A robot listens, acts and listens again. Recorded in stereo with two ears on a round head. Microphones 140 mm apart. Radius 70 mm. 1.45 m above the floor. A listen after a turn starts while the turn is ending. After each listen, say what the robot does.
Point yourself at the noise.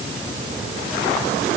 Keep listening.
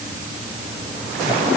Keep listening.
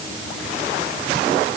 I can't make out anything.